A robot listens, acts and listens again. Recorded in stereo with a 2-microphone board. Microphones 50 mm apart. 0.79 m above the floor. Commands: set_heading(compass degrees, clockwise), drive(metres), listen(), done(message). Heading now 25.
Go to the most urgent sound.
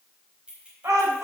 set_heading(115)
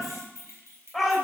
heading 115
drive(1.0)
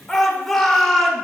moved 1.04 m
set_heading(105)
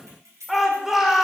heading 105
drive(1.0)
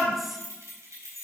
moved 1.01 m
listen()
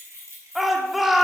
drive(1.0)
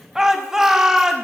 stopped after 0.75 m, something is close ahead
set_heading(115)
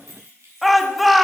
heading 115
done("Arrived at the shout, straight ahead.")